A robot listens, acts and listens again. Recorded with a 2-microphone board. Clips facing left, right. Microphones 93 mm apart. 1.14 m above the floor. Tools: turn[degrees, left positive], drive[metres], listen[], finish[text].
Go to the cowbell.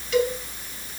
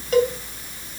Thought: The cowbell: about 40° right or 140° right.
Action: turn[-40]
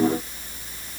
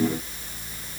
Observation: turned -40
Action: listen[]
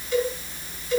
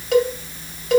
Thought: So it is at 100° right.
Action: turn[-100]
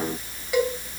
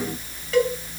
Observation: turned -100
Thought: The cowbell is now 15° left.
Action: turn[15]
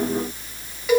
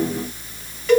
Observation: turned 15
Thought: The cowbell is now 10° left.
Action: turn[10]
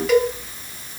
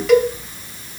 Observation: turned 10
Action: drive[1.0]
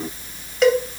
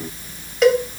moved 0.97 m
Action: drive[1.0]
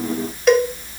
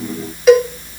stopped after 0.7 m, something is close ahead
Action: finish[I am next to the cowbell.]